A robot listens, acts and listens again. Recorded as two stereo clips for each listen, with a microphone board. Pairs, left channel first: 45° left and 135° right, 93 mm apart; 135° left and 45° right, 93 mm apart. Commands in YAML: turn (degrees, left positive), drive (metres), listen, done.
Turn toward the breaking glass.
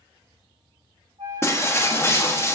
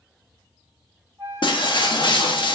turn: 105
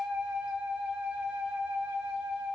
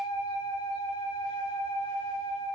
done: "Facing where the breaking glass came from. I can't hear it now."